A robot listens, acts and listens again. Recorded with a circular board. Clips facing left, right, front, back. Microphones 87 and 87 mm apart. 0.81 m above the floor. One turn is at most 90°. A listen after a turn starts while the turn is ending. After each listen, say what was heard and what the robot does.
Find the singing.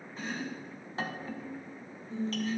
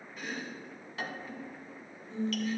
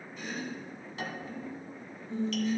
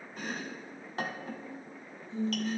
The singing: 15° left. Turn 15° left.
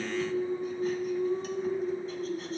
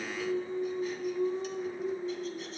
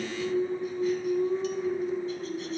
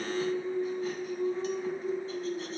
The singing is now 20° left. Turn 20° left.
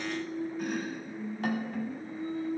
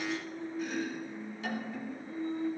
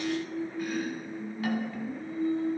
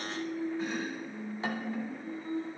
The singing is now 10° left. Turn 10° left.
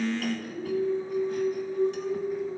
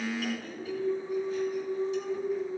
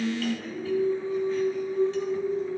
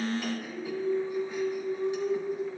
Found it: singing, straight ahead.